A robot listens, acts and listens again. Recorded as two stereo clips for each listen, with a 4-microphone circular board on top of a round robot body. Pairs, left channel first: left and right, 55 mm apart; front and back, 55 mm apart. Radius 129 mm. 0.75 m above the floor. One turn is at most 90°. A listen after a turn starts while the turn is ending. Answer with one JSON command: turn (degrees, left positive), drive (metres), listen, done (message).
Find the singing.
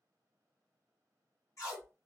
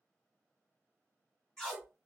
{"listen": true}
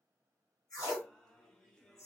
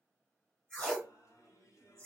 {"turn": 10}
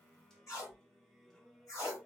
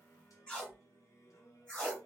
{"done": "Found it: singing, straight ahead."}